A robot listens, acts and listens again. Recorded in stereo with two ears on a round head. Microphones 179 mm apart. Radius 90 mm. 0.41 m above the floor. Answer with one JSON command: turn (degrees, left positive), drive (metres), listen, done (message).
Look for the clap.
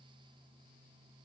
{"listen": true}
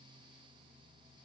{"listen": true}
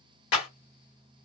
{"turn": 55}
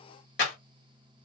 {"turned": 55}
{"turn": 50}
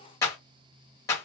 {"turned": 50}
{"turn": 20}
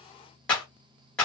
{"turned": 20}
{"done": "Found it: a clap, straight ahead, 1 to 2 m away."}